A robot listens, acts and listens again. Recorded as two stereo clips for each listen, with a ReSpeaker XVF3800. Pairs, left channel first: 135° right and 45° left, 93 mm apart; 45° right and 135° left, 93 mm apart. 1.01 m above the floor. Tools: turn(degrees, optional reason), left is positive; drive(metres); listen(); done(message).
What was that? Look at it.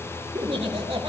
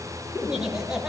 turn(degrees=50, reason="The laughter: 50° left.")
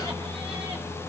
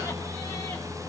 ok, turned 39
turn(degrees=15, reason="Nothing new. It was at 15° left.")
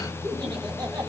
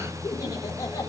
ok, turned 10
turn(degrees=10, reason="The laughter is now 10° left.")
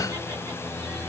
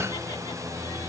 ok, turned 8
listen()
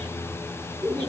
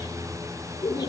done("Found it: laughter, straight ahead.")